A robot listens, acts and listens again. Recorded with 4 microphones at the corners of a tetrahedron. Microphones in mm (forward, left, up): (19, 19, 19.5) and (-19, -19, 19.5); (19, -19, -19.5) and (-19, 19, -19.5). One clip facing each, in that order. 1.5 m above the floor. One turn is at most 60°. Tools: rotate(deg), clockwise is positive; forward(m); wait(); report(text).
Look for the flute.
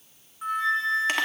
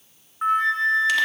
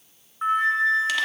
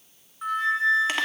rotate(60)
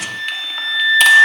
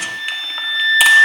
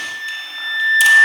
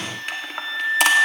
rotate(40)
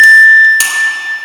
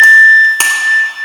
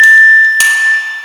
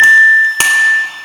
report("Found it: a flute, straight ahead.")